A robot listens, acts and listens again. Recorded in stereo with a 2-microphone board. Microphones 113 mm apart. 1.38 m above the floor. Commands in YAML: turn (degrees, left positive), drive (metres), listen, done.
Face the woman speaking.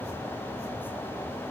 listen: true
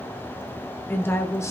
turn: 25
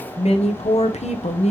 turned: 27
turn: 105
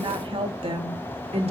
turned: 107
turn: -55
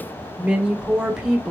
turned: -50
done: "Facing the woman speaking, 1 to 2 m away."